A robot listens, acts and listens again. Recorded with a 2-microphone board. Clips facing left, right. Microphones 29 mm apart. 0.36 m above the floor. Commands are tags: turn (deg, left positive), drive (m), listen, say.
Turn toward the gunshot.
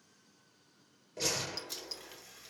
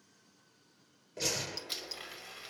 <turn deg="30"/>
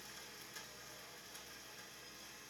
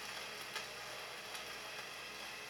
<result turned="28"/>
<listen/>
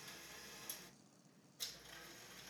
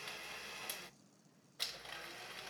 <say>I heard a gunshot, but can't make it out now. It was about 30° right or 155° left.</say>